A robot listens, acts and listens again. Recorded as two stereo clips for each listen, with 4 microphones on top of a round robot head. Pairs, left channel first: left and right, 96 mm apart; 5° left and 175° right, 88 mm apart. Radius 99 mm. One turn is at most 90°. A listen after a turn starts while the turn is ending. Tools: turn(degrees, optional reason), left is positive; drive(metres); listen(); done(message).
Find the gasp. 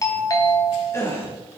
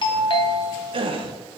turn(degrees=90, reason="The gasp: 160° left.")
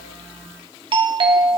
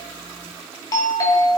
turn(degrees=70, reason="Nothing new. It was at 70° left.")
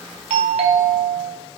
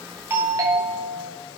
done("Facing where the gasp came from. I can't hear it now.")